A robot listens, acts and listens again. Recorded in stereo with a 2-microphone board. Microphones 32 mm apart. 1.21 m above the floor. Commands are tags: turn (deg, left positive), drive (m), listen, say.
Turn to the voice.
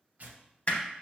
<listen/>
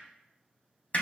<listen/>
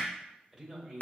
<turn deg="30"/>
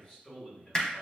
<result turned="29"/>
<turn deg="140"/>
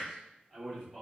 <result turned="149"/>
<turn deg="-15"/>
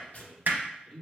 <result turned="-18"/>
<say>Facing the man speaking.</say>